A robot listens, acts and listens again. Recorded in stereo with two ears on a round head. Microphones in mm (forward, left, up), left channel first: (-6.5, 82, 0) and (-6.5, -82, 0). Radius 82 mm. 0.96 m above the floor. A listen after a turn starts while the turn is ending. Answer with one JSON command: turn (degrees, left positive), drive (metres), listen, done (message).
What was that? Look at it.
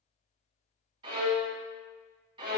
{"turn": -25}
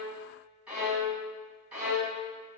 {"done": "Facing the violin, 1 to 2 m away."}